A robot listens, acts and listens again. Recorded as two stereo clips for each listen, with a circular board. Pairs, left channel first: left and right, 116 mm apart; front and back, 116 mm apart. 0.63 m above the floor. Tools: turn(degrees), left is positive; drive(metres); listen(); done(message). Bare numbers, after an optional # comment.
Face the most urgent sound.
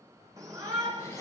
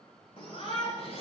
# The shout: 30° right.
turn(-30)
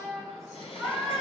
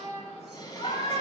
done("Found it: a shout, straight ahead, 2 to 4 m away.")